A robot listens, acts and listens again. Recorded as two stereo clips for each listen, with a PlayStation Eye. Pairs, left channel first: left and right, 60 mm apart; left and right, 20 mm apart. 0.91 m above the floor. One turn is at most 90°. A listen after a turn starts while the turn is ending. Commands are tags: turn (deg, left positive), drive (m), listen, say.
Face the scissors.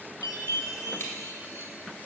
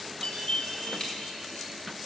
<listen/>
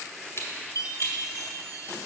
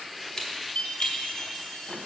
<turn deg="50"/>
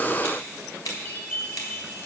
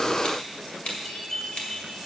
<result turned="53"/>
<turn deg="80"/>
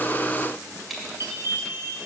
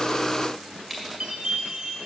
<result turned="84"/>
<say>Facing the scissors.</say>